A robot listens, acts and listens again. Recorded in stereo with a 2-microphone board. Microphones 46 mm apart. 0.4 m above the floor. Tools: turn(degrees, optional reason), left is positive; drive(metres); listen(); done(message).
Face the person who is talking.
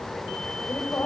turn(degrees=50, reason="The woman speaking: about 50° left or 130° left.")
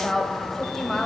turn(degrees=10, reason="So it is at 10° left.")
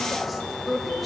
done("Facing the woman speaking.")